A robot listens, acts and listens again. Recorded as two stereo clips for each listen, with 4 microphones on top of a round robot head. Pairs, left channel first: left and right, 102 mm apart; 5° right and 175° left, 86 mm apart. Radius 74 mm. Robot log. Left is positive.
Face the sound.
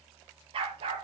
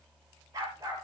note: The dog barking: 125° right.
cmd yaw -125
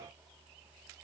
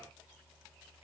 cmd idle
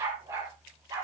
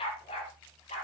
note: The dog barking is now 25° right.
cmd yaw -25
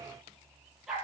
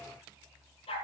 end: Found it: a dog barking, straight ahead, over 4 m away.